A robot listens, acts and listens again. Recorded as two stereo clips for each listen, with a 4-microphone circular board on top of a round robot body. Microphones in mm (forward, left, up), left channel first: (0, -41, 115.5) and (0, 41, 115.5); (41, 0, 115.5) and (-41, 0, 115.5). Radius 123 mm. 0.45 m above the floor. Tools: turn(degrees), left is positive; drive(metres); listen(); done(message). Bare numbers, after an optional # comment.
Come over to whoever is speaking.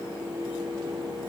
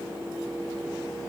listen()
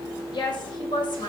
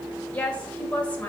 # The woman speaking: 75° right.
turn(-75)
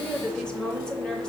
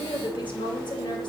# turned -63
# The woman speaking is now 10° right.
turn(-10)
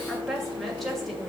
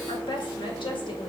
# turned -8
drive(1.0)
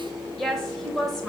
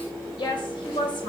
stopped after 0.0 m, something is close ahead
done("Something is in my way. I am facing the woman speaking but have not reached it.")